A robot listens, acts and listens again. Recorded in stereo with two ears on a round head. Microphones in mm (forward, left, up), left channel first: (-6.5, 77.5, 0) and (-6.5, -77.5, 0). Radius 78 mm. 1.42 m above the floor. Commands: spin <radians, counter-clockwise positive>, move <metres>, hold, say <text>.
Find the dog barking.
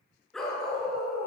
spin 0.52
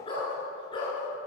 spin 2.62
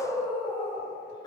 spin 0.44
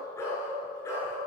spin 0.26
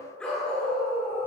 say Found it: a dog barking, straight ahead.